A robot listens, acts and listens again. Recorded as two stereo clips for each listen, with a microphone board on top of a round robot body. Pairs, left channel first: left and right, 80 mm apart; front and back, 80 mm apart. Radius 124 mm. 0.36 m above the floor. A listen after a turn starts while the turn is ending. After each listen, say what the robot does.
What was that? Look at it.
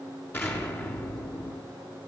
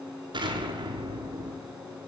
Turn 155° left.
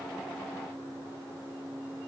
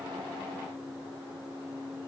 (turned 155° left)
I heard an explosion from this way, but can't make it out now.